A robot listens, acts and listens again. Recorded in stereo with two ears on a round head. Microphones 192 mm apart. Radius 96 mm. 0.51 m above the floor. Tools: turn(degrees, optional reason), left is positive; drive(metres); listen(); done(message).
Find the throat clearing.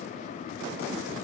listen()
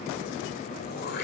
turn(degrees=50, reason="The throat clearing: about 50° left or 130° left.")
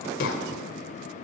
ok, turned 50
turn(degrees=75, reason="So it is at 75° left.")
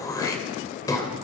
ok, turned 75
turn(degrees=20, reason="The throat clearing is now 20° left.")
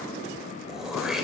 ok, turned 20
done("Found it: throat clearing, straight ahead, 2 to 4 m away.")